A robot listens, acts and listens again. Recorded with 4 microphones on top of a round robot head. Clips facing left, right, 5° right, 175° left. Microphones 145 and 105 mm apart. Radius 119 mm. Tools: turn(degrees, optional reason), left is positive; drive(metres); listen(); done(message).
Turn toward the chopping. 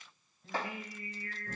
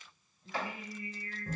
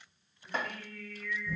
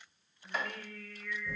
turn(degrees=40, reason="The chopping: 40° left.")
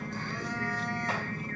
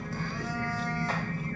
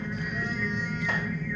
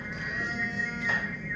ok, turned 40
listen()
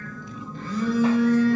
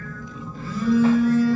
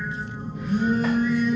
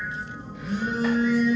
listen()
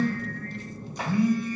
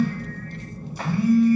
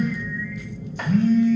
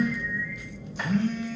done("I heard chopping from this way, but can't make it out now.")